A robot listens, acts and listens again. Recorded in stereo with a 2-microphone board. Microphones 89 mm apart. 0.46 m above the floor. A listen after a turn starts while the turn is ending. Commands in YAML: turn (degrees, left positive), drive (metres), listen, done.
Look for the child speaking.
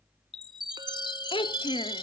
turn: 90
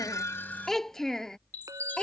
turn: 10
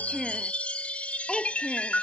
done: "Facing the child speaking."